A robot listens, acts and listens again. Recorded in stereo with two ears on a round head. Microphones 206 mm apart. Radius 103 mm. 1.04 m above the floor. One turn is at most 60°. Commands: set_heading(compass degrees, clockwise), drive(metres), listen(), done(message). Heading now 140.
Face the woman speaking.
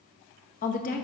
set_heading(105)
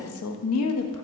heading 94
set_heading(34)
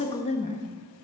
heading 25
set_heading(355)
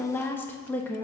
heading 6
set_heading(356)
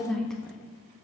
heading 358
done("Found it: a woman speaking, straight ahead, 1 to 2 m away.")